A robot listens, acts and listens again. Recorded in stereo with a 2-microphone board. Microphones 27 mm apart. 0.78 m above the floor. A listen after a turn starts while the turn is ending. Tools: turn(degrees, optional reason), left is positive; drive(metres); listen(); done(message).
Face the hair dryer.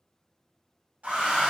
turn(degrees=-70, reason="The hair dryer: about 70° right or 110° right.")
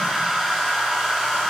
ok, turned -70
turn(degrees=-15, reason="So it is at 15° right.")
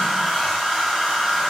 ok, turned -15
done("Found it: a hair dryer, straight ahead.")